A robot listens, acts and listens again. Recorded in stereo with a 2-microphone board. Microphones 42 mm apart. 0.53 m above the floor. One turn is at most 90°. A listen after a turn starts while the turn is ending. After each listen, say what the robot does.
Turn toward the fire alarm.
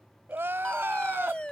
Turn 25° left.
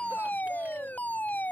Turn 90° left.
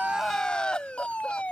Turn 40° left.
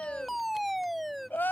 Facing the fire alarm.